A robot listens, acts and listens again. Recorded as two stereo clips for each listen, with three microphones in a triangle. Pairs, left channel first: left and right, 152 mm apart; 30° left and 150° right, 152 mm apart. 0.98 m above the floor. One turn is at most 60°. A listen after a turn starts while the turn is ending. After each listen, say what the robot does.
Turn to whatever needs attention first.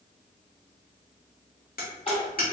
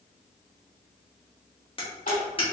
Turn 45° left.
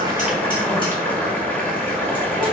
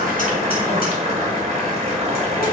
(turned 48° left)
Keep listening.
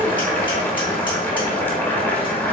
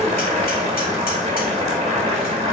Keep listening.
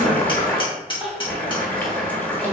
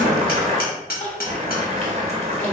Facing the crying.